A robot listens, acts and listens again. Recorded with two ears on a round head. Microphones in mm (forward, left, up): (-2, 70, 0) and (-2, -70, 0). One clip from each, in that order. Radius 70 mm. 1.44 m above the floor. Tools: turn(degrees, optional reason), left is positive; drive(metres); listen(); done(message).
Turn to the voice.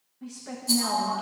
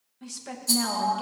turn(degrees=-70, reason="The woman speaking: about 70° right or 110° right.")
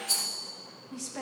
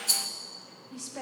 done("Facing the woman speaking.")